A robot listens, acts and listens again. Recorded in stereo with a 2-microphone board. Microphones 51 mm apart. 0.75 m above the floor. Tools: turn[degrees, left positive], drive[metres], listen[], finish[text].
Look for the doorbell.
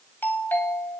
Thought: The doorbell: about 40° left or 140° left.
Action: turn[40]
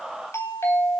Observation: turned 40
Thought: So it is at 90° left.
Action: turn[90]
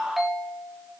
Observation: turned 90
Action: finish[Found it: a doorbell, straight ahead.]